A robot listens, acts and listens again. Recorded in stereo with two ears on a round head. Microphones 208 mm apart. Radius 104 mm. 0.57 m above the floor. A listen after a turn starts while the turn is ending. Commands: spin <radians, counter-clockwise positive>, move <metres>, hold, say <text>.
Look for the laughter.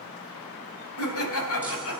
spin 1.13
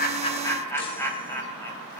spin 0.17
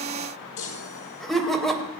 say Facing the laughter, 2 to 4 m away.